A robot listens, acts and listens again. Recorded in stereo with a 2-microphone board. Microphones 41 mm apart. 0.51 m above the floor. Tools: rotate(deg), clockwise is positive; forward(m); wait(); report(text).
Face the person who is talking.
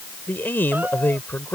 rotate(-55)
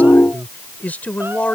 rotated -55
rotate(-50)
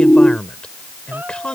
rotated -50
rotate(-30)
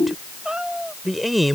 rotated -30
report("Facing the man speaking.")